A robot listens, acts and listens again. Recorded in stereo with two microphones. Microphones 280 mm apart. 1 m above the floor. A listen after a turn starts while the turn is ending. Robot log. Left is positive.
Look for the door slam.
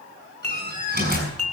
note: The door slam: about 35° right or 145° right.
cmd yaw -35
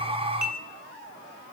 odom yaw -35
cmd idle
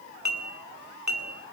end: I heard a door slam, but can't make it out now. It was about straight ahead or 110° right.